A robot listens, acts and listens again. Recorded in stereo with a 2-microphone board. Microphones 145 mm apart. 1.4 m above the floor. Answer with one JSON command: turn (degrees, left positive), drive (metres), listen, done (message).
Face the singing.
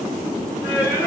{"turn": 20}
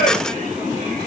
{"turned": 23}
{"turn": 140}
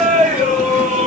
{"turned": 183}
{"turn": -55}
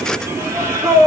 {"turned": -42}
{"turn": -20}
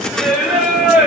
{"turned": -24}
{"done": "Facing the singing."}